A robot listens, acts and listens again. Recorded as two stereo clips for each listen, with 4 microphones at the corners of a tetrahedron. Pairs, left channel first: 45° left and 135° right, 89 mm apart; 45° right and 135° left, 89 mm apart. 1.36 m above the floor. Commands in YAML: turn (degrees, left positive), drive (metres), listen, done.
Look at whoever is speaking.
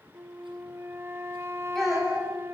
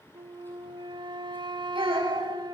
turn: 130
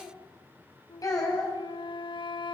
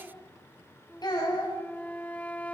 done: "Facing the child speaking, over 4 m away."